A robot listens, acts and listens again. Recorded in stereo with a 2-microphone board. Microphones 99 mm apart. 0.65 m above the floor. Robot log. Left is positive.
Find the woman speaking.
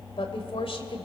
note: The woman speaking: about 70° left or 110° left.
cmd yaw +70
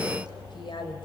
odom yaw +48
note: So it is at 60° left.
cmd yaw +60
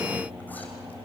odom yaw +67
cmd idle
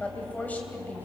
note: The woman speaking is now 20° left.
cmd yaw +20
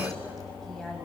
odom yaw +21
cmd idle
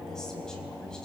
cmd idle
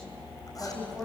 end: Facing the woman speaking, over 4 m away.